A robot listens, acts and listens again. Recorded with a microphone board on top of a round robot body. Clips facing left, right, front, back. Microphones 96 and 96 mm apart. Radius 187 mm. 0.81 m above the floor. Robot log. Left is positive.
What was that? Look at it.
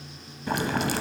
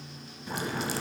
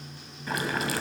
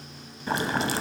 note: The boiling: 120° left.
cmd yaw +120
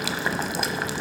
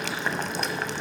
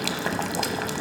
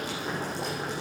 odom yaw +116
end: Facing the boiling, under 1 m away.